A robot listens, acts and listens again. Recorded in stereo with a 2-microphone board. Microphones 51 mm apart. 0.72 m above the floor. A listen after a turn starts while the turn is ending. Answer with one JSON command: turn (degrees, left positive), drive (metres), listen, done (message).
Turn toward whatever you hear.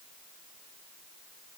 {"listen": true}
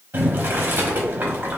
{"turn": -40}
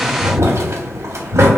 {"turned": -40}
{"turn": -100}
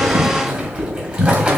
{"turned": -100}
{"turn": -30}
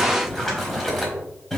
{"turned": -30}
{"done": "Facing the boiling, under 1 m away."}